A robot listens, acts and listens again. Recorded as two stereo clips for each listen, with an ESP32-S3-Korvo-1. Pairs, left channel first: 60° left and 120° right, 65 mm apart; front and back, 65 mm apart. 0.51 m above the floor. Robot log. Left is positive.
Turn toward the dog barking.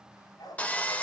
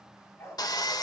note: The dog barking: 45° left.
cmd yaw +45
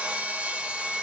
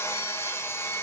cmd idle
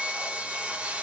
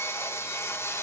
cmd idle
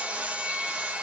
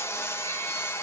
end: Facing where the dog barking came from. I can't hear it now.